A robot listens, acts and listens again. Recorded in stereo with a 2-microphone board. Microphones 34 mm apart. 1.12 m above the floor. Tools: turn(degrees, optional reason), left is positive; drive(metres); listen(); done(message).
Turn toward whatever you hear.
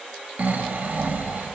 turn(degrees=-55, reason="The snoring: about 55° right or 125° right.")
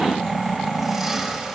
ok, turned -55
done("Found it: snoring, straight ahead, under 1 m away.")